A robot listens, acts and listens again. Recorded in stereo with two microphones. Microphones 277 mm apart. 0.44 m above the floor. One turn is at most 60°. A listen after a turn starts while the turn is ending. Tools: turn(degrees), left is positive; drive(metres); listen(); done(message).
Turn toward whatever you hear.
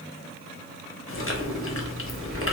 turn(degrees=50)
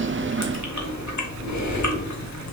turn(degrees=60)
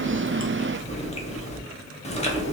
turn(degrees=25)
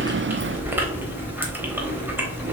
done("Found it: chewing, straight ahead, under 1 m away.")